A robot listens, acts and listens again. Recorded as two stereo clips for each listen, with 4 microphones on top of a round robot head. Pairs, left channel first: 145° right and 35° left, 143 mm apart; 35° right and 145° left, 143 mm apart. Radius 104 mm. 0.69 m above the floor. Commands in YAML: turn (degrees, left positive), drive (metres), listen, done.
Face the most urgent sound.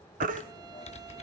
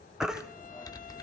turn: 55
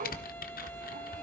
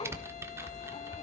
listen: true
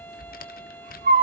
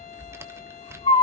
turn: 15
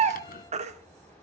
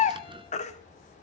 done: "Facing the baby crying, 1 to 2 m away."